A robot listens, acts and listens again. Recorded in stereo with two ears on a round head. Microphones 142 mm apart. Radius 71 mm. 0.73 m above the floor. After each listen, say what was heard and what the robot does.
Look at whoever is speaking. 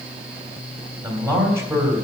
The man speaking: about 20° right or 160° right. Turn 20° right.
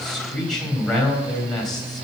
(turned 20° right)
Facing the man speaking, 2 to 4 m away.